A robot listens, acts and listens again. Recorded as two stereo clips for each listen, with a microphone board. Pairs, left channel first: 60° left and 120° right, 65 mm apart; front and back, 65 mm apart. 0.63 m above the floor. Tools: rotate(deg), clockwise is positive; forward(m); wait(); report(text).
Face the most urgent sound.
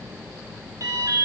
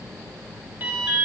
rotate(125)
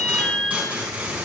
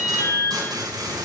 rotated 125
rotate(-10)
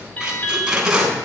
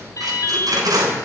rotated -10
report("Found it: an alarm, straight ahead.")